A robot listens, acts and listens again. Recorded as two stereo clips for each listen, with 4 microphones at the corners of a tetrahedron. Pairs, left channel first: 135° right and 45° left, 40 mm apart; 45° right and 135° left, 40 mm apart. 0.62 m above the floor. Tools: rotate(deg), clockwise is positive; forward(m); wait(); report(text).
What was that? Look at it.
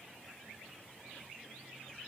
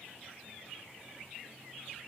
wait()
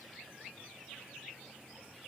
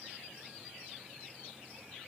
wait()
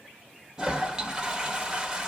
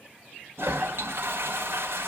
rotate(-115)
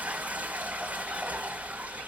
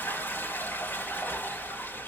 rotate(10)
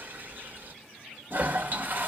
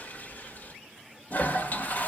report("Facing the toilet flushing, 1 to 2 m away.")